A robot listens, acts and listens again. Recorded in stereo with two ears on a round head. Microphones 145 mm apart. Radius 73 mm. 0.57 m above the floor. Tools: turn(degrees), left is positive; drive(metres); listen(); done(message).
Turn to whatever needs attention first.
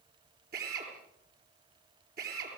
listen()
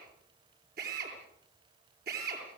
listen()
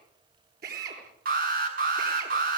turn(degrees=-55)
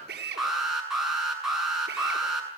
done("Found it: an alarm, straight ahead.")